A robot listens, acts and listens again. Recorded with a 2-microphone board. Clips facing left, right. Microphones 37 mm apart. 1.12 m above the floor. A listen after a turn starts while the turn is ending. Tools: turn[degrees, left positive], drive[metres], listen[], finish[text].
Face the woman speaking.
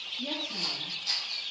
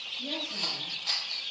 Action: turn[90]
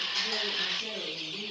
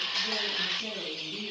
Thought: So it is at 35° right.
Action: turn[-35]
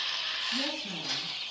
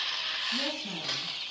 Action: finish[Facing the woman speaking.]